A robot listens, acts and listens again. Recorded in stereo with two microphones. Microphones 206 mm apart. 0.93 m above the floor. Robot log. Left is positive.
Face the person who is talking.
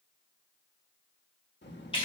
note: The child speaking: about 60° left or 120° left.
cmd yaw +60
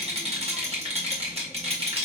cmd idle
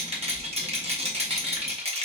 end: Facing the child speaking, 1 to 2 m away.